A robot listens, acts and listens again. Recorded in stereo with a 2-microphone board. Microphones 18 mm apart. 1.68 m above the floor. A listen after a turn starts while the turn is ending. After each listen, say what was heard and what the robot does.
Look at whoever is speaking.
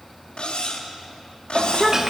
Turn 30° right.
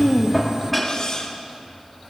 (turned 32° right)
Keep listening.
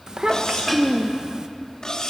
So it is at 135° right. Turn 135° right.
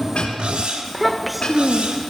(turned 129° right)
Found it: a child speaking, straight ahead, 1 to 2 m away.